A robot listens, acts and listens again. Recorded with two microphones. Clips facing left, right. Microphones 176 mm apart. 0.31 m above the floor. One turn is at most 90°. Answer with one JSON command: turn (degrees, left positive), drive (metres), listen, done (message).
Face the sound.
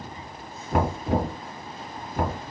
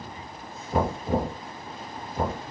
{"turn": 70}
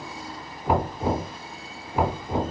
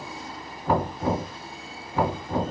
{"turn": 20}
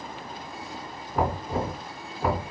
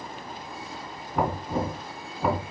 {"done": "Found it: knocking, straight ahead, 2 to 4 m away."}